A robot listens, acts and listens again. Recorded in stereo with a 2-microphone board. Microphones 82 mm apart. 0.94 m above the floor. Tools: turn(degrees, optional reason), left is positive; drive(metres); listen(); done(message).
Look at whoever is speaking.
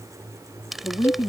turn(degrees=65, reason="The woman speaking: about 65° left or 115° left.")
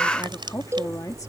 turn(degrees=45, reason="So it is at 45° left.")
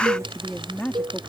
turn(degrees=15, reason="The woman speaking is now 15° left.")
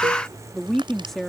done("Found it: a woman speaking, straight ahead.")